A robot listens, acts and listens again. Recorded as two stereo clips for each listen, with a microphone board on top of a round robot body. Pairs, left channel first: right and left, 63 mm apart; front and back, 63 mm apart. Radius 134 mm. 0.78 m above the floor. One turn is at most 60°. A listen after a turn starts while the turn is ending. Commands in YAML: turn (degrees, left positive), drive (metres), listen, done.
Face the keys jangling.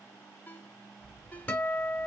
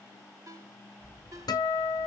turn: 60
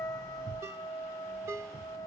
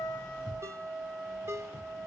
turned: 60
turn: 60
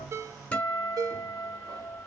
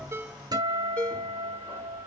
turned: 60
turn: 40
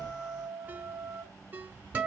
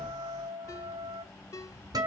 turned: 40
turn: 40
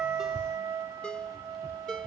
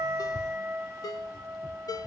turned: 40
listen: true
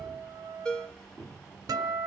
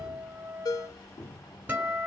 done: "Found it: keys jangling, straight ahead, 1 to 2 m away."